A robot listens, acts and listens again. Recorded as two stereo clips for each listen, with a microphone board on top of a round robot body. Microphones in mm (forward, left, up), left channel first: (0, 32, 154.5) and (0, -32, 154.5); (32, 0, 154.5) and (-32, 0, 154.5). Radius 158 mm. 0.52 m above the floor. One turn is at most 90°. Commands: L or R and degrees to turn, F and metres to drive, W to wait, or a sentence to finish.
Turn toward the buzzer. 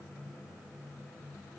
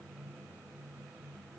W
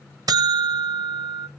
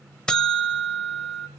R80
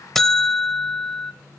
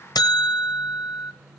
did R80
Facing the buzzer.